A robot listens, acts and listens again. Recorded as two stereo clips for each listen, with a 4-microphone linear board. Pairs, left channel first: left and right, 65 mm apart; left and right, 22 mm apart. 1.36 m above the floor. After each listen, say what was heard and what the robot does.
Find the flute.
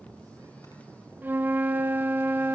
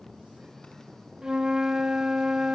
The flute: about 30° right or 150° right. Turn 30° right.
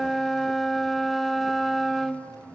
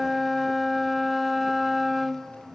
Facing the flute.